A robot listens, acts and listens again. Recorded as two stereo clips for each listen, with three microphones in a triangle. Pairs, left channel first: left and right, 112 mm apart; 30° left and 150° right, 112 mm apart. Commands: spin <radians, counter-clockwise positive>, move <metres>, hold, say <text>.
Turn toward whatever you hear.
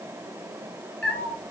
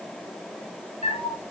spin 0.17
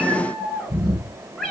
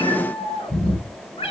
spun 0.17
say Found it: a cat meowing, straight ahead, 2 to 4 m away.